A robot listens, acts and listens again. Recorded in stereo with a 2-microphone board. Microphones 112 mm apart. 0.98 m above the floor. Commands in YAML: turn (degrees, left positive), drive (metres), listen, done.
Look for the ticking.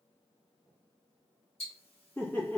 turn: 70
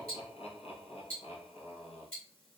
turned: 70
turn: 10
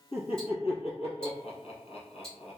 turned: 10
turn: 10
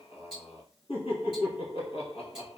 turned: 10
done: "Facing the ticking."